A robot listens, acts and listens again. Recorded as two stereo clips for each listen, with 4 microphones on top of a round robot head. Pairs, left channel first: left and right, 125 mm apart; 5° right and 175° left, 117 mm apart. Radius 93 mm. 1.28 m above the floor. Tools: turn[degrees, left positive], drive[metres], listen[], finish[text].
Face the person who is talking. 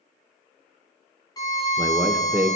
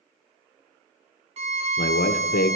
Thought: The man speaking: 10° right.
Action: turn[-10]
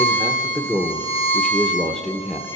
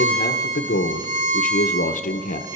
Action: finish[Found it: a man speaking, straight ahead.]